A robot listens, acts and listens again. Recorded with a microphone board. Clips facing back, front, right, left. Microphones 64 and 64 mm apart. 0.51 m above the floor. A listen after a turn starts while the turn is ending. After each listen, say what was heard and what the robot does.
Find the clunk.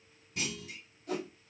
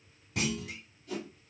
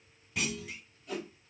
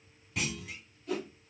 Facing the clunk, 1 to 2 m away.